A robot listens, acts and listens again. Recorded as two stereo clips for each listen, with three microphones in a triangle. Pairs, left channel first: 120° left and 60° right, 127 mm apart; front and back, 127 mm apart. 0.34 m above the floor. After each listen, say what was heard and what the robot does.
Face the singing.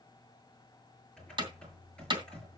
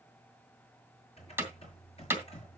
Keep listening.
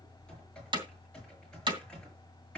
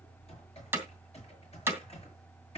Keep listening.
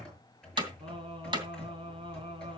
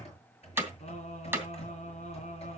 The singing: 15° right. Turn 15° right.
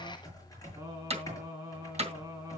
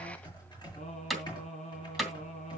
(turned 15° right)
Found it: singing, straight ahead, over 4 m away.